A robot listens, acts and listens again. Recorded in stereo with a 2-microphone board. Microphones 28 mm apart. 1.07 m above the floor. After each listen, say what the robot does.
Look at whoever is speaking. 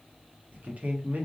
Turn 90° right.
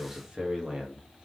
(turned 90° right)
Turn 25° right.
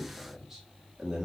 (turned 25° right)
Turn 20° right.
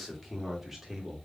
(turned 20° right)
Turn 10° right.
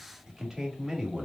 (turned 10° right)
Turn 15° right.
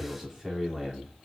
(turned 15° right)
Found it: a man speaking, straight ahead, 2 to 4 m away.